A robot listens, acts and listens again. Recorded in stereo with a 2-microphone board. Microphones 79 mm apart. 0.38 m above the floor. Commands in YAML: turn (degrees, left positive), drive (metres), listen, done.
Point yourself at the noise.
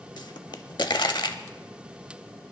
turn: 70
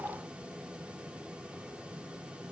listen: true
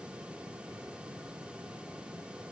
done: "I heard a pop, but can't make it out now. It was about straight ahead or 40° left."